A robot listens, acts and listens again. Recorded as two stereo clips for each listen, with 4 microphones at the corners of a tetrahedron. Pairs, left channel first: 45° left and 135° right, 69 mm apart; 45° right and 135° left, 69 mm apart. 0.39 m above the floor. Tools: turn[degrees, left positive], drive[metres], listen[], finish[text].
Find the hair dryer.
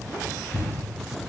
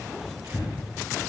Action: listen[]
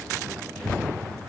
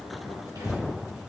Action: listen[]
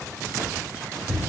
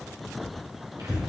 Action: finish[I can't make out a hair dryer to turn to.]